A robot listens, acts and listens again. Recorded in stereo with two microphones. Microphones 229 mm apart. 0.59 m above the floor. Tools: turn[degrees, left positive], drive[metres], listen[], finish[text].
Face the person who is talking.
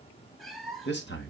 Thought: The man speaking: about 50° left or 130° left.
Action: turn[50]
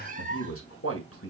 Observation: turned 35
Thought: So it is at 90° left.
Action: turn[90]
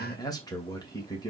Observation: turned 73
Thought: The man speaking is now 15° left.
Action: turn[15]
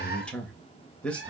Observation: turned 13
Action: finish[Facing the man speaking.]